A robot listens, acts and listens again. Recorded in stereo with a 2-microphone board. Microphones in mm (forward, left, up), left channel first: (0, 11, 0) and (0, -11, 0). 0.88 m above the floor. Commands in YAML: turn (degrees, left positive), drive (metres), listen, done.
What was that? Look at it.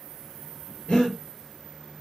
turn: 90
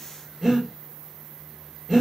done: "Found it: breathing, straight ahead, 2 to 4 m away."